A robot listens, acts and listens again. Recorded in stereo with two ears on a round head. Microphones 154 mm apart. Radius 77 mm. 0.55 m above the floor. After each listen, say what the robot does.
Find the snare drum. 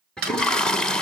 Turn 65° right.
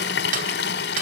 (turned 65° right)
Turn 50° right.
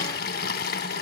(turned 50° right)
Keep listening.
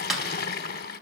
Found it: a snare drum, straight ahead.